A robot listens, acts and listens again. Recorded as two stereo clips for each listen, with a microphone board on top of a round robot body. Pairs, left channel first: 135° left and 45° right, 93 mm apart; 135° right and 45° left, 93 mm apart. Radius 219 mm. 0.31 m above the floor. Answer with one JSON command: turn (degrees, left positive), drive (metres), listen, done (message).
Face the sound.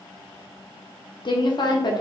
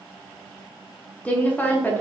{"turn": 160}
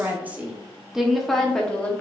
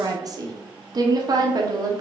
{"turn": 65}
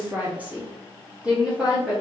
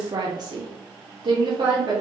{"turn": 40}
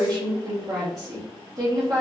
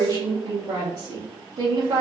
{"done": "Found it: a woman speaking, straight ahead, 1 to 2 m away."}